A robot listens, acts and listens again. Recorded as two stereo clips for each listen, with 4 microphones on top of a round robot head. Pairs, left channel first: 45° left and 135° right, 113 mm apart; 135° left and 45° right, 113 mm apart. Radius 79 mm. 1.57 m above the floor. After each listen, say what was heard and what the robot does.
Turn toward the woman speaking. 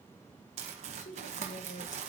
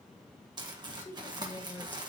The woman speaking: 55° left. Turn 55° left.
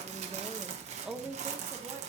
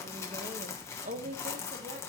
The woman speaking is now 70° right. Turn 70° right.
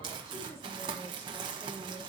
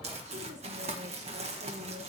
Keep listening.
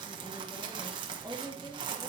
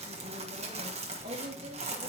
The woman speaking is now 30° right. Turn 30° right.
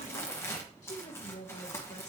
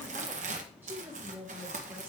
The woman speaking is now 25° left. Turn 25° left.
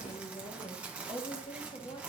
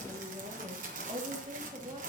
Facing the woman speaking.